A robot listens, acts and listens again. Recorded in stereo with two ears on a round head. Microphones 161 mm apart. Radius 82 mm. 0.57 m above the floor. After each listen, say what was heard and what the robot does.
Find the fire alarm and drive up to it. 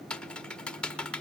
Keep listening.
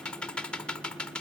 Keep listening.
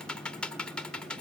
I can't make out a fire alarm to turn to.